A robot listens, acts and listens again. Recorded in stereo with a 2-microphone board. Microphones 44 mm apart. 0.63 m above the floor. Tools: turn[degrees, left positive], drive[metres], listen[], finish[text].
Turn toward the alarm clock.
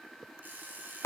Thought: The alarm clock: about 45° right or 135° right.
Action: turn[-45]
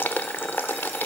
Action: listen[]
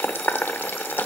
Action: listen[]
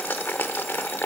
Action: finish[I heard an alarm clock, but can't make it out now. It was about straight ahead or 90° right.]